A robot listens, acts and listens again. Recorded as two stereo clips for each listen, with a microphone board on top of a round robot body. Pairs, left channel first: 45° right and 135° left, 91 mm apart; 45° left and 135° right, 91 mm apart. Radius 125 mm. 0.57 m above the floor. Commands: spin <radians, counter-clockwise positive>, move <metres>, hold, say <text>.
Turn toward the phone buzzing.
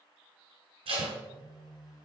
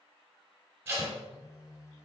say Facing the phone buzzing.